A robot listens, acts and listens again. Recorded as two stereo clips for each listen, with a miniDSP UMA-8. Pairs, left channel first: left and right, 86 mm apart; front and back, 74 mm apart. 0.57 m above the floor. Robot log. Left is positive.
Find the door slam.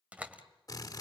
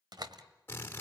note: The door slam: 165° right.
cmd yaw -165
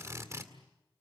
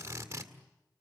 end: I heard a door slam from this way, but can't make it out now.